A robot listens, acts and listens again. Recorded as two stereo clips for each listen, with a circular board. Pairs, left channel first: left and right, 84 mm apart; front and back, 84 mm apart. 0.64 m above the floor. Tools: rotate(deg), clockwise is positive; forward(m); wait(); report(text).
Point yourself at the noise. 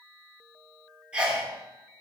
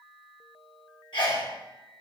rotate(15)
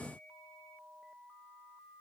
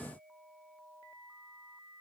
report("I heard a sneeze from this way, but can't make it out now.")